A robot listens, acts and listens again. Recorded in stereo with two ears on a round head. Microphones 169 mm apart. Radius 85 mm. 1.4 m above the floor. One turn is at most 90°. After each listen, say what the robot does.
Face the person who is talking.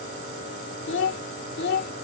Turn 60° left.
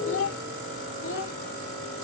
Turn 75° left.
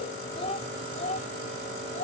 Turn 40° left.
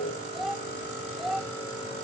Found it: a child speaking, straight ahead.